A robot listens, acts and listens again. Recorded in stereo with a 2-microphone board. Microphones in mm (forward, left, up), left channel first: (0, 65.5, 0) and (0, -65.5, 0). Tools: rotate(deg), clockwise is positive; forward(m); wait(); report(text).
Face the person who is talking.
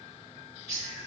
wait()
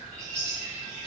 wait()
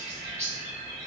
report("I can't make out anyone speaking, only a bird.")